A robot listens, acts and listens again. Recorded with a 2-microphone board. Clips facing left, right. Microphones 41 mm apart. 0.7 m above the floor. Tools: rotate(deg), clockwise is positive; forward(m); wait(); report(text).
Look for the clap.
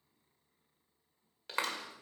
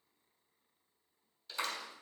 rotate(-65)
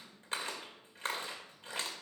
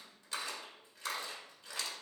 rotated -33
rotate(-40)
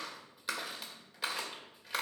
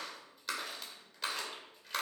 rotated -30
report("Facing the clap, 2 to 4 m away.")